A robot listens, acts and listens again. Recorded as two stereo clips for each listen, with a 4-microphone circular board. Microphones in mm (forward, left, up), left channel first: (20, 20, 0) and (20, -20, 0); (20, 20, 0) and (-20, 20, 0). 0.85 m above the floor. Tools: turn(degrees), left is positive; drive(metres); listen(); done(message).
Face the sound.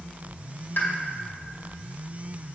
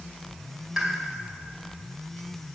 turn(degrees=100)
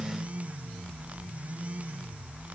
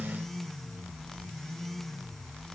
done("I heard a pop from this way, but can't make it out now.")